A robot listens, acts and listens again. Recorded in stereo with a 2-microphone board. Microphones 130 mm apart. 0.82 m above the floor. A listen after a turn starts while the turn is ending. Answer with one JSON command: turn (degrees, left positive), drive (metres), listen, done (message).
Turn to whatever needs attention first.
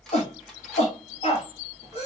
{"turn": 60}
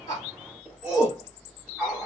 {"done": "Found it: a shout, straight ahead, 2 to 4 m away."}